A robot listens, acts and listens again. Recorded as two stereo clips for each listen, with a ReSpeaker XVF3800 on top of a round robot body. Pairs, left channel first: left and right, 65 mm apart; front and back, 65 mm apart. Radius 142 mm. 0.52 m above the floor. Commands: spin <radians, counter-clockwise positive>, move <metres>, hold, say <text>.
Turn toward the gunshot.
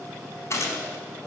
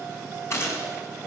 spin 0.79
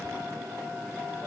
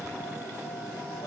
say Facing where the gunshot came from. I can't hear it now.